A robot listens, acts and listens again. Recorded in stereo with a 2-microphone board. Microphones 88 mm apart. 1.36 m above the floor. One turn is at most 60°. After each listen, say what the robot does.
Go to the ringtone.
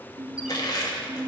Turn 45° right.
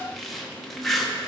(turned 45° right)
Keep listening.
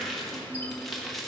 Keep listening.
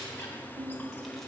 Turn 60° right.
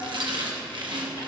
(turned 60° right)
Turn 30° right.
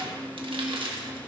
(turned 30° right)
Drive 1.0 m forward.
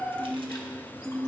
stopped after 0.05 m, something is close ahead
Blocked. The ringtone is further on, straight ahead.